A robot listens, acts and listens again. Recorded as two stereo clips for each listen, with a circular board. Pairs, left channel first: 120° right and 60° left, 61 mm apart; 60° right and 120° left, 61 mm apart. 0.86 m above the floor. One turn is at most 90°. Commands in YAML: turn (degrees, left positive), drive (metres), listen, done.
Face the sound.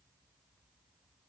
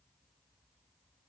listen: true
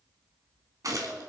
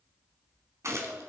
turn: 85
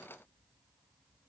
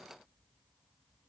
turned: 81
done: "I heard a gunshot from this way, but can't make it out now."